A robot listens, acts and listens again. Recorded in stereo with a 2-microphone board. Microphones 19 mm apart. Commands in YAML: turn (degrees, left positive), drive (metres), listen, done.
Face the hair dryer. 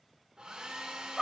turn: -55
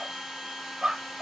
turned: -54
done: "Facing the hair dryer, 2 to 4 m away."